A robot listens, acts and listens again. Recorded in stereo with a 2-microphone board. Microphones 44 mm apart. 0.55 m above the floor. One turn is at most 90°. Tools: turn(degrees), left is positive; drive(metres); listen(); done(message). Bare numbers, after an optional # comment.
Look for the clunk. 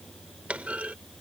# The clunk: about 30° right or 150° right.
turn(-30)
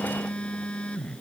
listen()
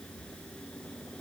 done("I heard a clunk, but can't make it out now. It was about straight ahead or 120° right.")